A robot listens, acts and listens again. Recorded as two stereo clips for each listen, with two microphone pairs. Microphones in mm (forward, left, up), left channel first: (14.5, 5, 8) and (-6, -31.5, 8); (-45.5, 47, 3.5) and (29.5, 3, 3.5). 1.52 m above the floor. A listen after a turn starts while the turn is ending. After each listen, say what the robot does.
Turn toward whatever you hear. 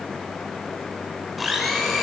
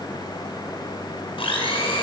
Turn 150° left.
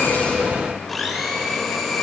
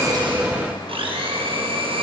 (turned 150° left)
Turn 30° right.
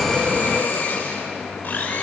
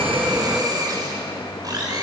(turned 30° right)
Turn 15° left.
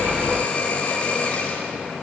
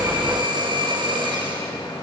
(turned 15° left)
Facing the blender, over 4 m away.